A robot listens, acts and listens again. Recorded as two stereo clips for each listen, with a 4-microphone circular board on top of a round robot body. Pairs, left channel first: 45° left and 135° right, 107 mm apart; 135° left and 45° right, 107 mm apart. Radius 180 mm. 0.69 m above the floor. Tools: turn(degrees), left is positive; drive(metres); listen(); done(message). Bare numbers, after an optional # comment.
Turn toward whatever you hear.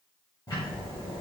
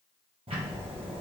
# The ticking: 10° right.
turn(-10)
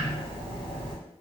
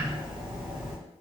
done("Found it: ticking, straight ahead, under 1 m away.")